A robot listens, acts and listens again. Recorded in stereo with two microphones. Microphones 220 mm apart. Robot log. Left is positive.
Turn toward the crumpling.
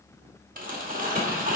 note: The crumpling: about 40° right or 140° right.
cmd yaw -40
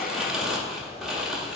end: Found it: crumpling, straight ahead, 1 to 2 m away.